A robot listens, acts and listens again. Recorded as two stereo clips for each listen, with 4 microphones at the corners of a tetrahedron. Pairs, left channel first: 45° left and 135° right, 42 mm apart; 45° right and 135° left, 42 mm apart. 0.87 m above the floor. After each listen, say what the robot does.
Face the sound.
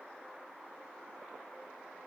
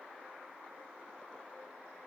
Keep listening.
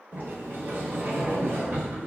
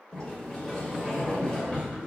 Turn 120° right.
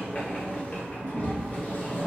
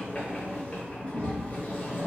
Facing the sliding door, under 1 m away.